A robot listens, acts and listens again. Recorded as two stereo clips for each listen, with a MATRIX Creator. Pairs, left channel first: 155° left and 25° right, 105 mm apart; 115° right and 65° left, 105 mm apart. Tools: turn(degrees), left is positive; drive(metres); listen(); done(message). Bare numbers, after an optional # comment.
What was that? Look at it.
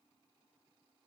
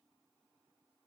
listen()
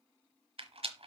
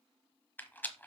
# The rattle: 40° right.
turn(-40)
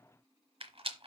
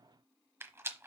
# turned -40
done("Facing the rattle.")